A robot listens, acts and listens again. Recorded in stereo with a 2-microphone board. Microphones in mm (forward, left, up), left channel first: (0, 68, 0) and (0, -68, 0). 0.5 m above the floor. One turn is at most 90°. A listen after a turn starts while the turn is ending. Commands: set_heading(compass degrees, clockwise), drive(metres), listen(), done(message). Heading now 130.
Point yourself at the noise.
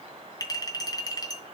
set_heading(100)
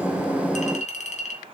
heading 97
set_heading(7)
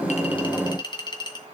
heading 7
set_heading(332)
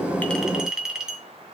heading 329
done("Facing the clink, 2 to 4 m away.")